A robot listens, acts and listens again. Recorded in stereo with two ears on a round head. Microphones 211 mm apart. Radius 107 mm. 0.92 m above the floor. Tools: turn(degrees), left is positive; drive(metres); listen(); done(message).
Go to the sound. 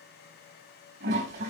turn(degrees=-45)
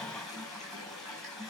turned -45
drive(metres=1.0)
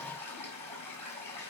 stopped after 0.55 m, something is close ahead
turn(degrees=10)
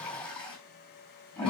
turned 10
done("Something is in my way. I am facing the toilet flushing but have not reached it.")